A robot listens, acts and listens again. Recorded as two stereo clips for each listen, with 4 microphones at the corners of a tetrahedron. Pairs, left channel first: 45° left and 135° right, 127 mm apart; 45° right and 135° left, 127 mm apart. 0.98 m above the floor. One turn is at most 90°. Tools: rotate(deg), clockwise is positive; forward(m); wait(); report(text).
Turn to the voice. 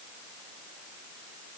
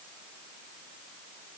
wait()
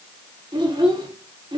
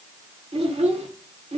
rotate(-90)
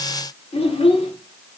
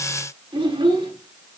rotate(-85)
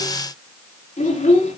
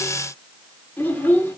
rotate(-30)
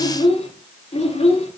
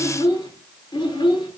rotate(-10)
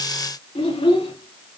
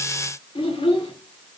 report("Found it: a child speaking, straight ahead.")